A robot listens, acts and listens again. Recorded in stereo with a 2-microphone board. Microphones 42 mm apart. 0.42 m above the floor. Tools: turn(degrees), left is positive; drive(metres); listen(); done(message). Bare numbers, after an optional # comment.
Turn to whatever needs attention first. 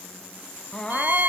# The crying: about 20° left or 160° left.
turn(20)
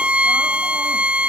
listen()
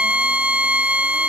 listen()
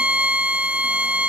done("I heard crying, but can't make it out now. It was about straight ahead or 140° left.")